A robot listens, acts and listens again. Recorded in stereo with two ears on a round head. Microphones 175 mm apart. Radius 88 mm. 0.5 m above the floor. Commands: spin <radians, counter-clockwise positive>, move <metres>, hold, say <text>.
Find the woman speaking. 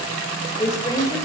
spin 0.26
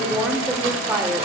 spin -0.26
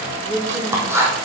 spin -0.26
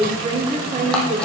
spin -0.70
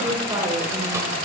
hold
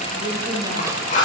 hold
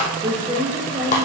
spin -0.44
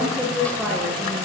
say Facing the woman speaking.